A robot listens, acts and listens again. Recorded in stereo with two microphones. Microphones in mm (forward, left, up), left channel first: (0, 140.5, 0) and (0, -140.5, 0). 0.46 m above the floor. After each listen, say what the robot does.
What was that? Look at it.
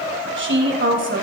Turn 45° right.
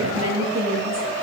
Turn 85° right.
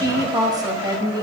Turn 15° right.
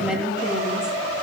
Found it: a woman speaking, straight ahead, 2 to 4 m away.